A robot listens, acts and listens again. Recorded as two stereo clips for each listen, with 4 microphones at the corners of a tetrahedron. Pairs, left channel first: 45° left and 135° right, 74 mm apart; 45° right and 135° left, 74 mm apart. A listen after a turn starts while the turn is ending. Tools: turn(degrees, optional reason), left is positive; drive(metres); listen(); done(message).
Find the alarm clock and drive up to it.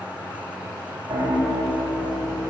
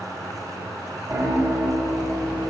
listen()
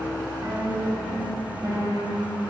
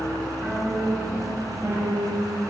listen()
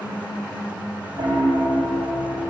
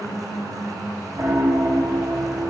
done("I can't make out an alarm clock to turn to.")